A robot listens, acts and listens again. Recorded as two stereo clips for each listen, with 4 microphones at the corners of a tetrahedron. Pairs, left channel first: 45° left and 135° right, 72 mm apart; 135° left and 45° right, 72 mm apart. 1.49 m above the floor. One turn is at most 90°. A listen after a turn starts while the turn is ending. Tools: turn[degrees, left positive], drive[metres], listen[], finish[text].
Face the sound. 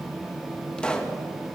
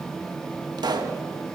Thought: The pop: 30° right.
Action: turn[-30]
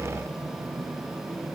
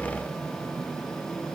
Action: finish[Facing where the pop came from. I can't hear it now.]